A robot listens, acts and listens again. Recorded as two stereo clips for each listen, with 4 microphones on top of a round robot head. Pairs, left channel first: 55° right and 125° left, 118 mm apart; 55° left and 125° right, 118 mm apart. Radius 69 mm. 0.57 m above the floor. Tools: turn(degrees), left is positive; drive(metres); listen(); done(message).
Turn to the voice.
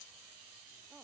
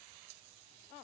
listen()
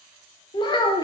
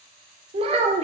turn(degrees=-105)
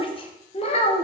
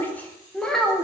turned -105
turn(degrees=-35)
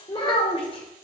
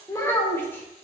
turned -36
turn(degrees=-15)
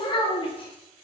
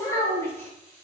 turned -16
turn(degrees=-15)
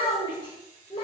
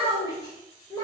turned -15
done("Facing the child speaking, 2 to 4 m away.")